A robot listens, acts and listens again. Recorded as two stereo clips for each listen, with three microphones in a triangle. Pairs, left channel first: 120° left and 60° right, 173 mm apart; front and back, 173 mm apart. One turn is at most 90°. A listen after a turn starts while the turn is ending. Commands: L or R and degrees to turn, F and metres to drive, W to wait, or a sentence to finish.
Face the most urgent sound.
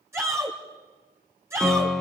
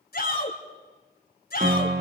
L15
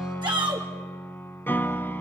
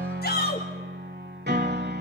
Found it: a shout, straight ahead, 2 to 4 m away.